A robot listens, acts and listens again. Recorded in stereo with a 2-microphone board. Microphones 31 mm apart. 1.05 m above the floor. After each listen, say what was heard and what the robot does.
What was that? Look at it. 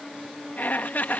The laughter: about 60° left or 120° left. Turn 60° left.
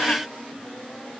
Keep listening.
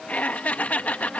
So it is at 55° left. Turn 55° left.
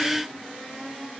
Keep listening.
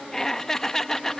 The laughter is now 15° left. Turn 15° left.
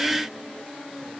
Keep listening.
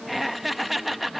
Facing the laughter.